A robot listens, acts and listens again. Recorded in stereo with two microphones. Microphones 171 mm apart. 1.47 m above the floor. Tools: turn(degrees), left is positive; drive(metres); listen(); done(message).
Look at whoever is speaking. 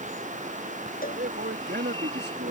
turn(degrees=-90)
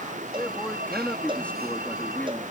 turn(degrees=10)
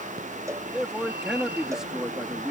done("Facing the man speaking.")